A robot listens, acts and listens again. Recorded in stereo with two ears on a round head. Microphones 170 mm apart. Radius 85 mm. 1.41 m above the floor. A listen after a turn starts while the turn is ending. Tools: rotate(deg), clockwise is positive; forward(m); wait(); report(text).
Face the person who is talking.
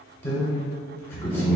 rotate(-30)
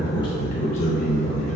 rotate(-140)
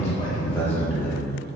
rotate(-10)
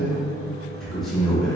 report("Facing the man speaking.")